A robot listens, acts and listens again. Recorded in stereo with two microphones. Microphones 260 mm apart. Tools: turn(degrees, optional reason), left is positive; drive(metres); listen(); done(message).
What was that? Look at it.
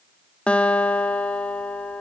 turn(degrees=30)
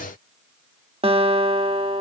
turn(degrees=-25, reason="So it is at 25° right.")
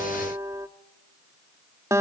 turn(degrees=-10, reason="The guitar is now 10° right.")
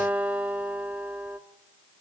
done("Found it: a guitar, straight ahead, 1 to 2 m away.")